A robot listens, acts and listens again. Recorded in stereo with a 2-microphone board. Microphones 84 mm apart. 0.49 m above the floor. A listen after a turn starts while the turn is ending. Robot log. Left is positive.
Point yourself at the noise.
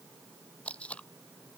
cmd yaw +30
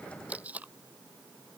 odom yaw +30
note: So it is at 20° right.
cmd yaw -20
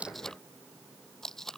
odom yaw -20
end: Found it: tape being pulled, straight ahead.